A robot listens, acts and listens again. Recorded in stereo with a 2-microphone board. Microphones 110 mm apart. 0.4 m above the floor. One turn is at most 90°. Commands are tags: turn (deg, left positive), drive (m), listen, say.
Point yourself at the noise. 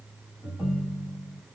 <turn deg="-20"/>
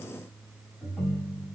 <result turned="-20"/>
<say>Facing the ringtone, 1 to 2 m away.</say>